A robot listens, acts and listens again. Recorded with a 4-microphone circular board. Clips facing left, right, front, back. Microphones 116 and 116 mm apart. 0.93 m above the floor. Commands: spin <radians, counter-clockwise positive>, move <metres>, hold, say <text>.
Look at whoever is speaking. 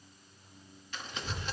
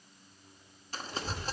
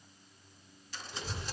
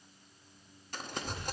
spin -1.13
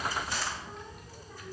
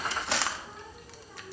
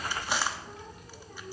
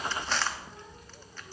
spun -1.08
say Found it: a child speaking, straight ahead, 1 to 2 m away.